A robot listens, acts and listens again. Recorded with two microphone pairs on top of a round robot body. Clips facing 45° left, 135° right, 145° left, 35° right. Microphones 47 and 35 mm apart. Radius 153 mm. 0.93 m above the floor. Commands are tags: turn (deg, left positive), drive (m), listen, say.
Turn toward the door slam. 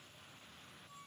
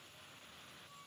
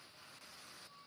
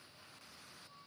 <listen/>
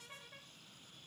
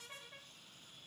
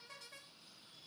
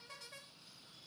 <listen/>
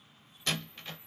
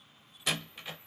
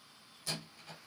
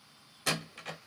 <turn deg="-55"/>
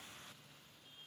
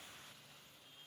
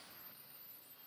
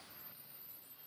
<say>I heard a door slam from this way, but can't make it out now.</say>